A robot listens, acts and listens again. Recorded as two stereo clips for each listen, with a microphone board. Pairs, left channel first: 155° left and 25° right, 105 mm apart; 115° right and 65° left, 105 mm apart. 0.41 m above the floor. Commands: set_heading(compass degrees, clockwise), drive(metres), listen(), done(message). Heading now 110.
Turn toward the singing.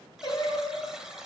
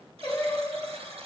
set_heading(275)
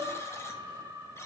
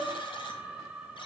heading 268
done("Facing the singing.")